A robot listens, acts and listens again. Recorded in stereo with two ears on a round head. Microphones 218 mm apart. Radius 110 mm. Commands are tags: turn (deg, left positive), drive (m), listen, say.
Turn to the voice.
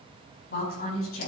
<turn deg="45"/>
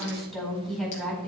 <say>Facing the woman speaking, over 4 m away.</say>